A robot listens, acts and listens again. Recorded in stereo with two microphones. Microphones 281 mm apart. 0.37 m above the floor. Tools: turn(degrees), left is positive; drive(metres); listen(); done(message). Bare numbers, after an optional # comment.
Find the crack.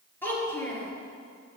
listen()
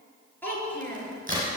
# The crack: about 30° right or 150° right.
turn(-30)
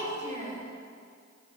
listen()
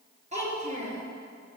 done("I heard a crack, but can't make it out now. It was about straight ahead or 120° right.")